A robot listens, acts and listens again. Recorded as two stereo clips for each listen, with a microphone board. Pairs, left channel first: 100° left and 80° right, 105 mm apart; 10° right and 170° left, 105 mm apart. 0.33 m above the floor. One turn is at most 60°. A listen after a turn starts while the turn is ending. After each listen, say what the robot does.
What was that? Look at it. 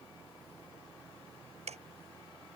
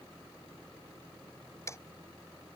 Turn 60° right.
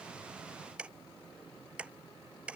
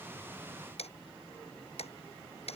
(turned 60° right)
Found it: ticking, straight ahead.